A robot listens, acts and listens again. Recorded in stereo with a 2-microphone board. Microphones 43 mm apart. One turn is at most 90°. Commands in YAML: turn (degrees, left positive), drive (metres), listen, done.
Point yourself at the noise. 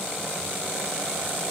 listen: true
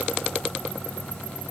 listen: true
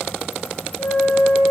turn: 65
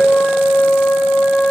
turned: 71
turn: 45
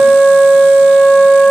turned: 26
turn: 20
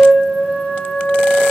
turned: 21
done: "Found it: a flute, straight ahead."